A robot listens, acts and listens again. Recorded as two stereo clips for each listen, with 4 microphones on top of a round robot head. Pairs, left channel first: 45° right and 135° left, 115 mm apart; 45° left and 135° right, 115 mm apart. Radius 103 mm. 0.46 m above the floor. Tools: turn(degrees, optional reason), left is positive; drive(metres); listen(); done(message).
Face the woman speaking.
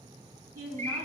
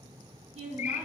turn(degrees=-165, reason="The woman speaking: 165° right.")
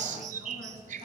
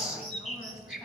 listen()
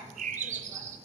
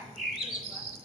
listen()
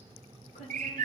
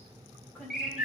turn(degrees=-35, reason="The woman speaking is now 35° right.")
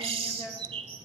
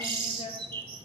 turn(degrees=10, reason="The woman speaking is now 10° left.")
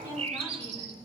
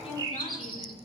listen()
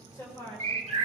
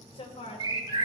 turn(degrees=15, reason="The woman speaking is now 15° left.")
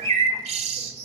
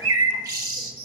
listen()
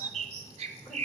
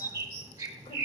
listen()
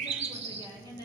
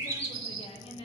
done("Facing the woman speaking, 2 to 4 m away.")